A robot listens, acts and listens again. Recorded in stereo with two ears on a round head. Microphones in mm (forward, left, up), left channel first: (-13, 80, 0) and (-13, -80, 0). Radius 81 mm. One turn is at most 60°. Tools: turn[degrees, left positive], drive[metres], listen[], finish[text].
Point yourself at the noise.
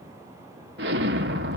Thought: The explosion: about 60° right or 120° right.
Action: turn[-60]
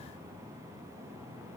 Action: listen[]
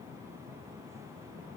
Action: finish[I heard an explosion, but can't make it out now. It was about straight ahead or 60° right.]